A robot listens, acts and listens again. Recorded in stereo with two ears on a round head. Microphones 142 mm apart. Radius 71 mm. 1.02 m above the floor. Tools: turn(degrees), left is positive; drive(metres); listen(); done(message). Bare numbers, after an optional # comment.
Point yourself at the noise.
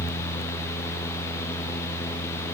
listen()
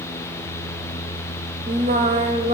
# The singing: about 40° right or 140° right.
turn(-40)
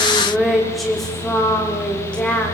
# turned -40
# So it is at 10° left.
turn(10)
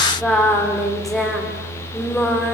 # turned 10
done("Found it: singing, straight ahead, 2 to 4 m away.")